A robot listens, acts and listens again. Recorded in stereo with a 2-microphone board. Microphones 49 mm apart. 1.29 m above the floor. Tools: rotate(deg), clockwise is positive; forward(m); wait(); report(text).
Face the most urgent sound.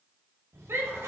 rotate(60)
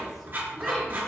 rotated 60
wait()
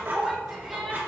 report("Found it: a shout, straight ahead.")